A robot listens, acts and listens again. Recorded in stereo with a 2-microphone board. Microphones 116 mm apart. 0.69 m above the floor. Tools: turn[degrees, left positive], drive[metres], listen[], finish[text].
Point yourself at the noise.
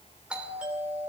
Action: turn[-30]
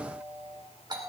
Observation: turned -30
Thought: So it is at 140° right.
Action: turn[-140]
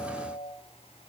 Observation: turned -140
Thought: The doorbell is now 55° right.
Action: turn[-55]
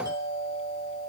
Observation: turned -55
Thought: The doorbell is now 35° right.
Action: turn[-35]
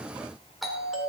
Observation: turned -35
Action: finish[Found it: a doorbell, straight ahead, 2 to 4 m away.]